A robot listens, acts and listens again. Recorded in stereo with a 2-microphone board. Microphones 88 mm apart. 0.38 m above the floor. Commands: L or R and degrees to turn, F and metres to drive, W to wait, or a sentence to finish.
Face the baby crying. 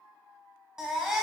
R30
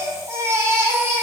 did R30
R145
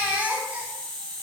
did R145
R20
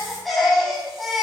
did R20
Facing the baby crying, under 1 m away.